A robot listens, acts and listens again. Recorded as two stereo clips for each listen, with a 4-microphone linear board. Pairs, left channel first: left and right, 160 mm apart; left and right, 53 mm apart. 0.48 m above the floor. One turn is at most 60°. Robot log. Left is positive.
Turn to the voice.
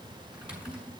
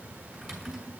cmd idle
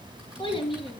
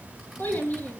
note: The child speaking: about 30° left or 150° left.
cmd yaw +30
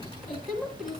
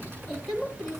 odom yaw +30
end: Facing the child speaking, 2 to 4 m away.